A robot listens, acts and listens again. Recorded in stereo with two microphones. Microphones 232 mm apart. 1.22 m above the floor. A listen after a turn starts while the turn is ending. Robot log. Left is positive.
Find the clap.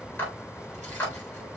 cmd yaw +30
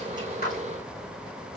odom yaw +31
cmd idle
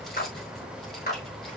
note: So it is at 140° left.
cmd yaw +140
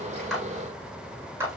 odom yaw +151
note: The clap is now 10° right.
cmd yaw -10
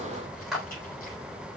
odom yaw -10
end: Facing the clap, over 4 m away.